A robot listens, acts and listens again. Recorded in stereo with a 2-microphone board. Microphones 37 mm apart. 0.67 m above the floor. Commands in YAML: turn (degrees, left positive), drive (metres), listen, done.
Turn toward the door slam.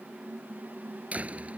turn: -40
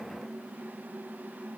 listen: true
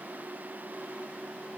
done: "I heard a door slam, but can't make it out now. It was about straight ahead or 100° right."